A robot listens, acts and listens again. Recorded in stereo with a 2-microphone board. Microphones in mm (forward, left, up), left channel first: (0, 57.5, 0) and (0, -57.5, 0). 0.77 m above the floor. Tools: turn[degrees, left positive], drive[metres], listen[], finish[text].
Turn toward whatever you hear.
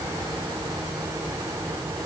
Action: listen[]
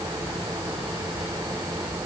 Action: listen[]
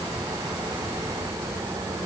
Action: finish[I can't make out anything.]